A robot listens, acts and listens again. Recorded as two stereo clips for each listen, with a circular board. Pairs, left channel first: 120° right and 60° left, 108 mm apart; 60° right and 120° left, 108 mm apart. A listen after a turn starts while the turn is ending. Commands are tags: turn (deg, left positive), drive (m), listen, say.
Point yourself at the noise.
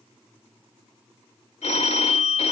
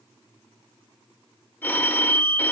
<turn deg="-130"/>
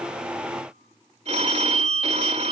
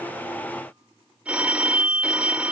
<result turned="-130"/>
<turn deg="40"/>
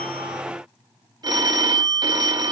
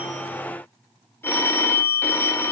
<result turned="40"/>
<turn deg="10"/>
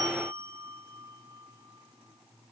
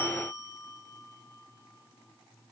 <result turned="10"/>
<say>Found it: a phone ringing, straight ahead, 1 to 2 m away.</say>